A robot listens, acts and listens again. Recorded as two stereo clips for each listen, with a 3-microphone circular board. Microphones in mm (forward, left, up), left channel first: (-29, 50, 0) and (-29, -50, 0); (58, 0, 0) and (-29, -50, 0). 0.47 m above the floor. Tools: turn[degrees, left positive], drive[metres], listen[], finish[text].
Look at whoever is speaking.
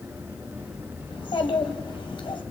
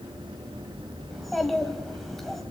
Thought: The child speaking: 115° left.
Action: turn[115]
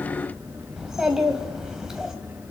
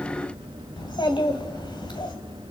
Thought: The child speaking is now 10° right.
Action: turn[-10]
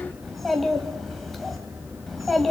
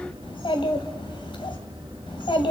Action: finish[Facing the child speaking, 2 to 4 m away.]